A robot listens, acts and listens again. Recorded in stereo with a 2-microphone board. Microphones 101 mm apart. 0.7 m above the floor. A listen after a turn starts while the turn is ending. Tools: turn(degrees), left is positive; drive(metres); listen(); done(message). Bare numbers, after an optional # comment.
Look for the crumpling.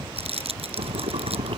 turn(-90)
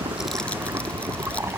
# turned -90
listen()
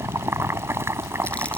listen()
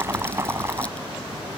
done("Facing where the crumpling came from. I can't hear it now.")